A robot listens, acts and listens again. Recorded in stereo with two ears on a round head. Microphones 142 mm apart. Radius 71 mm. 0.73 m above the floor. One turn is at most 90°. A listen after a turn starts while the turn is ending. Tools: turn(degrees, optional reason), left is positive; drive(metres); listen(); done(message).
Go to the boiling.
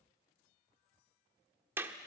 listen()
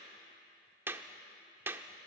listen()
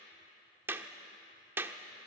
done("I can't make out boiling to turn to.")